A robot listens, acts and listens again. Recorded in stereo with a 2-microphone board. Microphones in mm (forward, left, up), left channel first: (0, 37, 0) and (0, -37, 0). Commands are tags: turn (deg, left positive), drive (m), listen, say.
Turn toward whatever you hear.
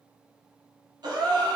<turn deg="-70"/>
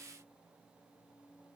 <listen/>
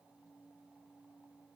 <say>I heard a gasp, but can't make it out now. It was about straight ahead or 40° right.</say>